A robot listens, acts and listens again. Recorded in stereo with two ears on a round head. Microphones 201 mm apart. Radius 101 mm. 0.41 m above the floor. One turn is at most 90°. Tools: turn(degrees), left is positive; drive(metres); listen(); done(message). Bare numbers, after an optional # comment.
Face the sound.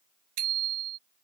# The bicycle bell: about 75° right or 105° right.
turn(-75)
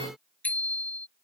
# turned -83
done("Found it: a bicycle bell, straight ahead.")